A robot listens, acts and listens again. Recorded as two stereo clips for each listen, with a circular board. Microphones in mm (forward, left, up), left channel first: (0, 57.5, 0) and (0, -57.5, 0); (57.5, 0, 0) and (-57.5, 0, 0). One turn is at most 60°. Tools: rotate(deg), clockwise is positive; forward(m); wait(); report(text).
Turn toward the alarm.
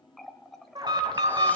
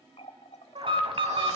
rotate(60)
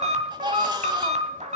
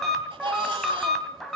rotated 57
rotate(60)
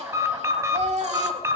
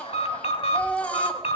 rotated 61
rotate(25)
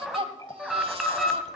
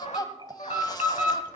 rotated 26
report("Found it: an alarm, straight ahead.")